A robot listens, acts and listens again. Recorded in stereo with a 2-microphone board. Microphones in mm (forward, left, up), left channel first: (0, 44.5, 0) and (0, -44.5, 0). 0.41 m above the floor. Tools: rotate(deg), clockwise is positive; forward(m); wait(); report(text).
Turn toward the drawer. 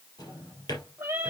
rotate(-50)
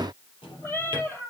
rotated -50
rotate(-80)
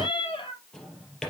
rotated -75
report("Facing the drawer, 2 to 4 m away.")